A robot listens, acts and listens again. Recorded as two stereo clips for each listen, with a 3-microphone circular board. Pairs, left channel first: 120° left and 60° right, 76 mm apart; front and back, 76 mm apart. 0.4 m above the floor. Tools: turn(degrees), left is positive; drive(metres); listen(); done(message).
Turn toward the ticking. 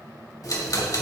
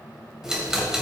turn(degrees=100)
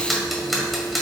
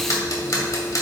turn(degrees=30)
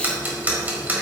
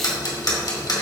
done("Found it: ticking, straight ahead, 1 to 2 m away.")